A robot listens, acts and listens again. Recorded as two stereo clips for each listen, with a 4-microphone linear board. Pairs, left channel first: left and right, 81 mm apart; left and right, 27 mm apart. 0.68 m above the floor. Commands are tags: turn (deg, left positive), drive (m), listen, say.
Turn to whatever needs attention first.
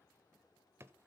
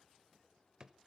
<listen/>
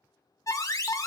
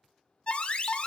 <turn deg="40"/>
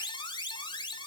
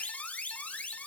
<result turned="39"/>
<turn deg="100"/>
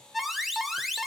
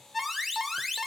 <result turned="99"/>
<say>Found it: an alarm, straight ahead.</say>